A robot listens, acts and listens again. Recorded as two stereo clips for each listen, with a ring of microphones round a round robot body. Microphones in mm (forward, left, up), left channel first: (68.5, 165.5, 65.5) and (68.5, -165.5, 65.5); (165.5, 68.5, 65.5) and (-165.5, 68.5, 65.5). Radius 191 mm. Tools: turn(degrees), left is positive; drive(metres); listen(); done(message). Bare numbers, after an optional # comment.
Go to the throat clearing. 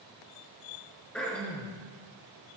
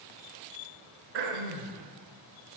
# The throat clearing: 175° left.
turn(175)
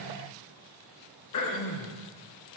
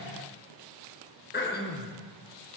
# The throat clearing is now 60° left.
turn(60)
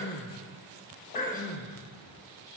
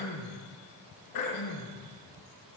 # The throat clearing is now 25° left.
turn(25)
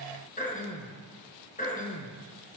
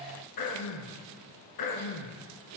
# The throat clearing is now 25° left.
turn(25)
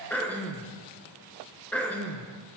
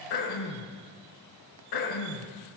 drive(1.0)
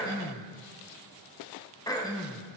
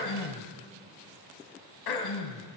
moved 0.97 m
# The throat clearing is now 10° left.
turn(10)
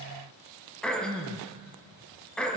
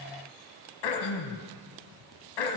drive(1.0)
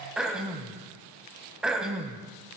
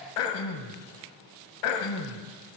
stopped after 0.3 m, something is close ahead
done("I am next to the throat clearing.")